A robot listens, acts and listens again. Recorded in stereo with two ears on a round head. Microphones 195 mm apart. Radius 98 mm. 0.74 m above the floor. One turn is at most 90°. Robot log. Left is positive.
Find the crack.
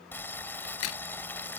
note: The crack: about 75° left or 105° left.
cmd yaw +75
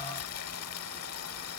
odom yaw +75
cmd idle
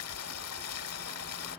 end: I heard a crack, but can't make it out now. It was about straight ahead or 30° left.